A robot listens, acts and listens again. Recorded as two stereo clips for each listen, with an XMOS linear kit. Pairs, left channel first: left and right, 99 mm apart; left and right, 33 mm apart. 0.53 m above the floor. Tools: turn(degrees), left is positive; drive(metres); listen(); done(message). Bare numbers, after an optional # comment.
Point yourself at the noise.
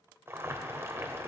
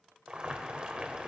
# The boiling: about 25° right or 155° right.
turn(-25)
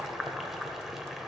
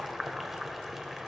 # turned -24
done("Facing the boiling.")